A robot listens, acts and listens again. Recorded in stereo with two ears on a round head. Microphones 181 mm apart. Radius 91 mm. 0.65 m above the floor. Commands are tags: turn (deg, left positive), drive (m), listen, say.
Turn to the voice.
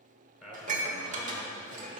<turn deg="30"/>
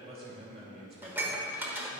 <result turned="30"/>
<turn deg="-35"/>
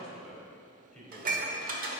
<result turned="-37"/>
<say>Found it: a man speaking, straight ahead.</say>